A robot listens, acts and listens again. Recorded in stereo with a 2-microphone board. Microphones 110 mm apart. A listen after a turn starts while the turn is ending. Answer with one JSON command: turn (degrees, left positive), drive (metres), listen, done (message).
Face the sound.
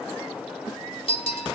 {"turn": 55}
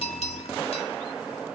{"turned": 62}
{"listen": true}
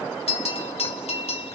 {"turn": 65}
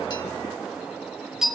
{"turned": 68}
{"done": "Facing the bell, 1 to 2 m away."}